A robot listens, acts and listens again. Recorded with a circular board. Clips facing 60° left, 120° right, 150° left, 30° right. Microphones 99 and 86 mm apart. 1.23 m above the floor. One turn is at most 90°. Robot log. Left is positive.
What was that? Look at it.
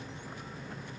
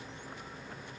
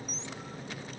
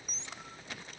cmd idle
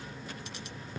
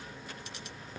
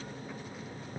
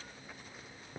cmd idle
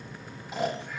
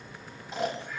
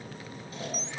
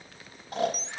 note: The snoring: 25° right.
cmd yaw -25
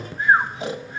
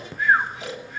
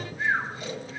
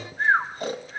note: The snoring is now 10° left.
cmd yaw +10
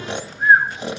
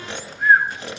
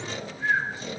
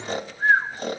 end: Facing the snoring, 2 to 4 m away.